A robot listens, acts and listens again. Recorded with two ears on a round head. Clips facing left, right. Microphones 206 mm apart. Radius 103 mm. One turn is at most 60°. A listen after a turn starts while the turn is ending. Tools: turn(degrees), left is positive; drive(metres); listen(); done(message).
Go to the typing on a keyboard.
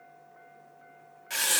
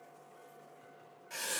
listen()
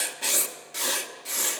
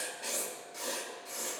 listen()
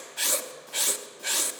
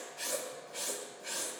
done("I can't make out typing on a keyboard, only writing.")